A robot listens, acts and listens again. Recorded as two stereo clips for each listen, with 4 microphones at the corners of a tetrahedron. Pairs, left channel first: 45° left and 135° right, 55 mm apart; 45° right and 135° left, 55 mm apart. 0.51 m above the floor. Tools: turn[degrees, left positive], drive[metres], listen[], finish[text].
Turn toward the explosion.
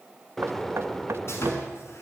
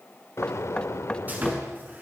Thought: The explosion: 40° right.
Action: turn[-40]
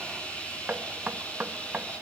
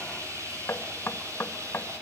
Action: finish[Facing where the explosion came from. I can't hear it now.]